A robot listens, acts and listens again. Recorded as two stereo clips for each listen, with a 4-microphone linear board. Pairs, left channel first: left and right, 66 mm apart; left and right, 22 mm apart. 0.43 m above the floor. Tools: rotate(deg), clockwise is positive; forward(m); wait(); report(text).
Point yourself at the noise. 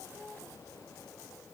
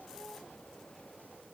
wait()
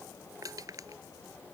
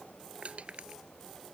rotate(65)
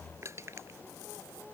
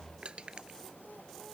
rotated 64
rotate(45)
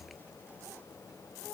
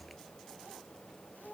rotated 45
wait()
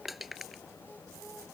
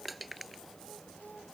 report("Facing the crushing.")